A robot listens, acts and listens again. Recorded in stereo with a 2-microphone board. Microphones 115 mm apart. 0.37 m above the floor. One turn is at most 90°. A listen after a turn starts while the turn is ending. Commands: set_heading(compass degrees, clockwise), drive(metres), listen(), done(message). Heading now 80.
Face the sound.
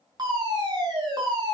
set_heading(115)
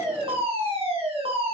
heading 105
set_heading(195)
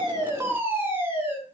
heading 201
set_heading(221)
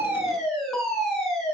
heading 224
done("Found it: a fire alarm, straight ahead, over 4 m away.")